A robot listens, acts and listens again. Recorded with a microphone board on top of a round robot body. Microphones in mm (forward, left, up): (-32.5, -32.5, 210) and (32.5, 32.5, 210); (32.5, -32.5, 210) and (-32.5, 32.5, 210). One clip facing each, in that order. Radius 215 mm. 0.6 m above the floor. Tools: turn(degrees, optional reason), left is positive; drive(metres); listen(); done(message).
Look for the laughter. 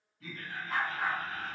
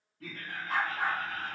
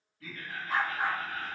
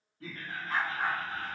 turn(degrees=65, reason="The laughter: 65° left.")
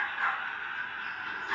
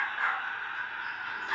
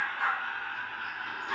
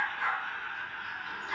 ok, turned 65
turn(degrees=-35, reason="The laughter is now 35° right.")
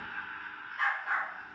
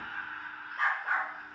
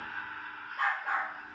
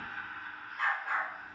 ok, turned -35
turn(degrees=-30, reason="The laughter is now 30° right.")
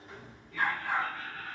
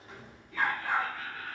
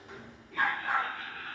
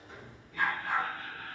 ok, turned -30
turn(degrees=-35, reason="The laughter is now 35° right.")
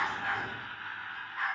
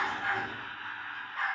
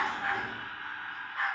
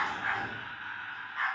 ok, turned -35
done("Found it: laughter, straight ahead.")